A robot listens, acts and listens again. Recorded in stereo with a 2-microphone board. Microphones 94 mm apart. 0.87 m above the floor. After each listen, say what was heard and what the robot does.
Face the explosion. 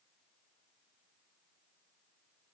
Keep listening.
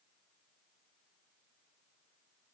Keep listening.
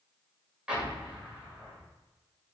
Turn 30° right.
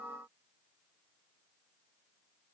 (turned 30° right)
Keep listening.
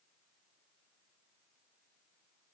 I heard an explosion, but can't make it out now. It was about 20° left or 140° right.